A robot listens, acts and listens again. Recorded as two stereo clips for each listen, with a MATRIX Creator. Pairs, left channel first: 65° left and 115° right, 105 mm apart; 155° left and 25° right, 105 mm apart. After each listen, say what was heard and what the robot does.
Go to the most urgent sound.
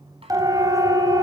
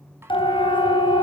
The siren: 170° right. Turn 170° right.
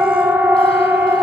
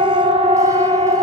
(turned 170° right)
The siren is now 40° right. Turn 40° right.
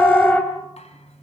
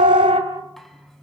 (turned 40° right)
The siren is now 10° right. Turn 10° right.
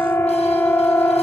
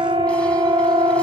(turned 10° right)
Drive 1.0 m forward.
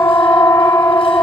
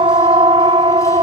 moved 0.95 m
Drive 1.0 m forward.
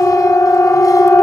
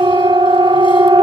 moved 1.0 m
Drive 1.0 m forward.
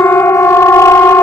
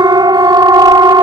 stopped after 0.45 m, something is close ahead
The siren is now 10° left. Turn 10° left.
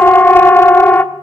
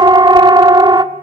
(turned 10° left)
I am next to the siren.